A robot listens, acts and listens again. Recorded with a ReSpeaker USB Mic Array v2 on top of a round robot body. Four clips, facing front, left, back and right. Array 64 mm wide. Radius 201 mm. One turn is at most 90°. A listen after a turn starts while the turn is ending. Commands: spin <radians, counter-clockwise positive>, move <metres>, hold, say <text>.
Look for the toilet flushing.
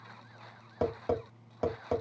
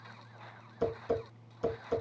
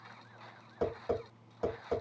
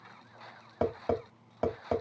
hold
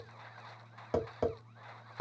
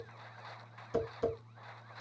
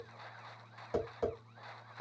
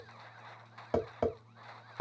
hold
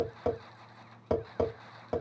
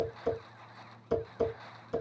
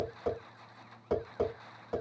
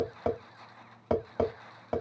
say I can't make out a toilet flushing to turn to.